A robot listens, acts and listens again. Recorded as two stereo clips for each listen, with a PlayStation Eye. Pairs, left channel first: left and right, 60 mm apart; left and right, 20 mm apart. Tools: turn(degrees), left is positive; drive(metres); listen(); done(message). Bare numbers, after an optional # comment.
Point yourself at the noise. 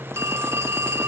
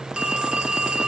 # The phone ringing: about 55° right or 125° right.
turn(-55)
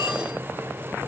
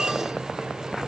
listen()
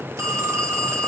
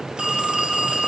# So it is at 70° right.
turn(-70)
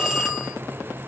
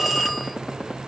# The phone ringing is now 10° right.
turn(-10)
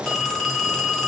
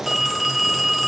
done("Facing the phone ringing.")